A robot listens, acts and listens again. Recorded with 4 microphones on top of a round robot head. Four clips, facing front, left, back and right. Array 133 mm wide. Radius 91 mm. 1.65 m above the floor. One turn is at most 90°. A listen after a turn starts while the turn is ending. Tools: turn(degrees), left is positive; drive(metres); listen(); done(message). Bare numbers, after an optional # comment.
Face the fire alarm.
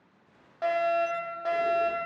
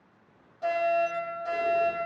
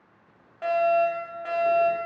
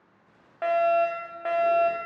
# The fire alarm: 70° right.
turn(-70)
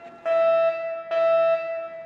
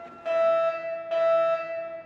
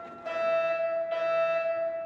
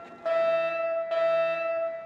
# The fire alarm is now 15° right.
turn(-15)
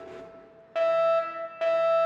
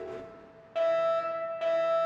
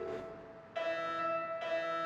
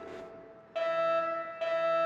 done("Facing the fire alarm, 1 to 2 m away.")